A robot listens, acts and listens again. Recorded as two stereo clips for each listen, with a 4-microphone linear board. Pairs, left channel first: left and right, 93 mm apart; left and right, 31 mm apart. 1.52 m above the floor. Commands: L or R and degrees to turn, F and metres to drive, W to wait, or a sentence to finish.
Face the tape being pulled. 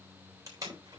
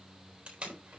R40
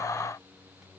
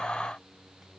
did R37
W
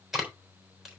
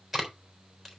Found it: tape being pulled, straight ahead, 2 to 4 m away.